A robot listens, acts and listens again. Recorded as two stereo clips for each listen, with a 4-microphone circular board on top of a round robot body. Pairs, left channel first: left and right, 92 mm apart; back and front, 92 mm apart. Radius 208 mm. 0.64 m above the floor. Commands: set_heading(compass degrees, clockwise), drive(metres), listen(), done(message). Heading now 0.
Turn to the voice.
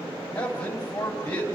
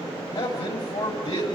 set_heading(200)
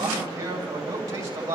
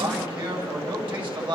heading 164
set_heading(199)
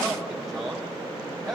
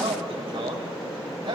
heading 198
done("Facing the man speaking.")